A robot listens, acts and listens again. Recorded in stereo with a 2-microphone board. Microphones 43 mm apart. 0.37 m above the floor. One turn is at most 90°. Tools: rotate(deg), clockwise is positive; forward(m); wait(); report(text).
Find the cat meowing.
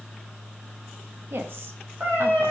rotate(50)
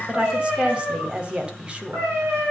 rotate(70)
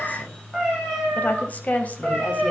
rotate(-10)
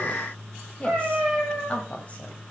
report("Found it: a cat meowing, straight ahead, over 4 m away.")